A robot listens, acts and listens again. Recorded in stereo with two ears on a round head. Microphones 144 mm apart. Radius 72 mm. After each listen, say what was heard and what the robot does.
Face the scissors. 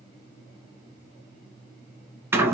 Keep listening.
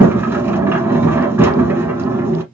Keep listening.
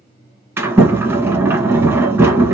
I can't make out scissors, only a sliding door.